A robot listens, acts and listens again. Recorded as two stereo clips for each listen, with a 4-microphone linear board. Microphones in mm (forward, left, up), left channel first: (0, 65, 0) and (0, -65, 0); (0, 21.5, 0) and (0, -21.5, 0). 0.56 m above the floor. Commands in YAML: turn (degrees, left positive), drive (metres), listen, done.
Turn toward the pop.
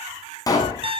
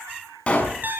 turn: 30
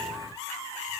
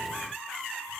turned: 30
listen: true
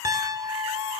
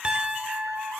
done: "I heard a pop, but can't make it out now. It was about straight ahead or 120° left."